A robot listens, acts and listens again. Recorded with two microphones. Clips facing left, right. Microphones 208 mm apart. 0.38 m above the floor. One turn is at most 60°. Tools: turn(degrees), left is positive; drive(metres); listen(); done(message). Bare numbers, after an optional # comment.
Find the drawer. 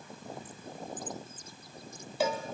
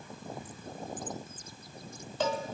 listen()
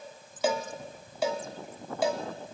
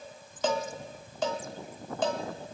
listen()
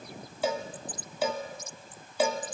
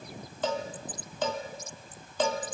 done("I can't make out a drawer to turn to.")